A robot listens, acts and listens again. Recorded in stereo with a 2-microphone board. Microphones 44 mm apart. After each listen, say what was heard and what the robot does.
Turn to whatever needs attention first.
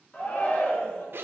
The shout: about 40° left or 140° left. Turn 40° left.
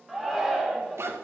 Facing the shout, 1 to 2 m away.